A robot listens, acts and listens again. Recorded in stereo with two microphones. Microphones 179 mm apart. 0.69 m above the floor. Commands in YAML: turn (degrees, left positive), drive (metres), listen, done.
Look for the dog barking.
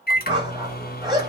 turn: -25
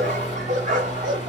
turn: -130
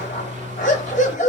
turn: 45
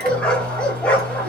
turn: 10
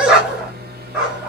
done: "Found it: a dog barking, straight ahead, 1 to 2 m away."